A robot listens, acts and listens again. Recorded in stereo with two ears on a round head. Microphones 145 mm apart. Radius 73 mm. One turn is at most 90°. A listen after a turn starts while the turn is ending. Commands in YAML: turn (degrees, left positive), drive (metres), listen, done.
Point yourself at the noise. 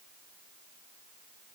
listen: true
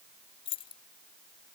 turn: 35
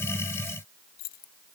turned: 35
turn: 90
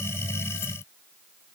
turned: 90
turn: 20
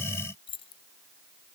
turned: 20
turn: 35
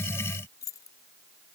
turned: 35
turn: 20
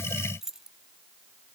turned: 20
done: "Found it: keys jangling, straight ahead."